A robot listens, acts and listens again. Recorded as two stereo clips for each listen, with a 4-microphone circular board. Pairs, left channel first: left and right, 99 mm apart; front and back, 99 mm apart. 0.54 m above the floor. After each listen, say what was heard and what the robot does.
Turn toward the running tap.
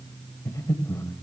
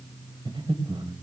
Keep listening.
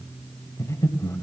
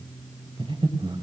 Keep listening.
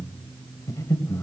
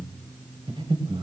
I can't make out a running tap, only breathing.